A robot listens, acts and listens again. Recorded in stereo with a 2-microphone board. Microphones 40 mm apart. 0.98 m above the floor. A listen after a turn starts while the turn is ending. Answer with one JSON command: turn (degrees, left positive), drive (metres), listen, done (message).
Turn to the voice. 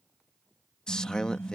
{"turn": 20}
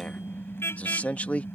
{"turn": 140}
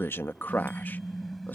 {"turn": 55}
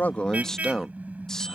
{"turn": 15}
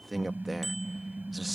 {"done": "Found it: a man speaking, straight ahead."}